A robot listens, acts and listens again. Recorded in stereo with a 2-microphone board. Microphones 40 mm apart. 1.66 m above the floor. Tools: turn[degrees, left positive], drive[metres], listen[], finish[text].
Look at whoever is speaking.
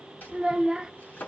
Thought: The child speaking: about 20° right or 160° right.
Action: turn[-20]
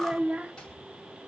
Thought: So it is at 135° right.
Action: turn[-135]
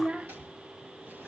Thought: The child speaking is now 45° right.
Action: turn[-45]
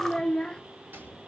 Thought: The child speaking is now 20° left.
Action: turn[20]
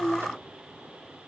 Action: finish[Found it: a child speaking, straight ahead, under 1 m away.]